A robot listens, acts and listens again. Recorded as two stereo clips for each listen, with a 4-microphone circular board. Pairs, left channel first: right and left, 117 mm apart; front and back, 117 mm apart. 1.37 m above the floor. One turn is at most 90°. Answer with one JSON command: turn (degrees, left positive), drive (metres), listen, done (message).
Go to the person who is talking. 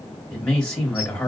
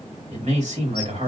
{"turn": -90}
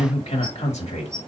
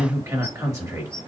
{"turn": -90}
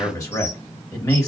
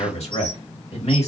{"turn": -30}
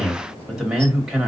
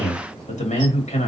{"drive": 1.0}
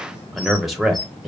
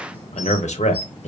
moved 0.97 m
{"drive": 1.0}
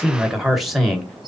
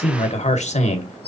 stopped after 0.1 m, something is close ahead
{"done": "I am next to the man speaking."}